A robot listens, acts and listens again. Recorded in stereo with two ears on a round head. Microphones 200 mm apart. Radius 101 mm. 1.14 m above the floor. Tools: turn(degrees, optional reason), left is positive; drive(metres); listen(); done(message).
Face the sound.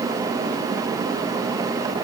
listen()
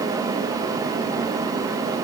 listen()
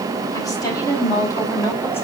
turn(degrees=30)
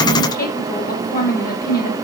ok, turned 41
turn(degrees=140, reason="So it is at 140° left.")
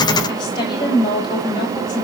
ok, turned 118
turn(degrees=20, reason="The woman speaking is now 20° left.")
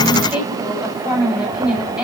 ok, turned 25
done("Facing the woman speaking.")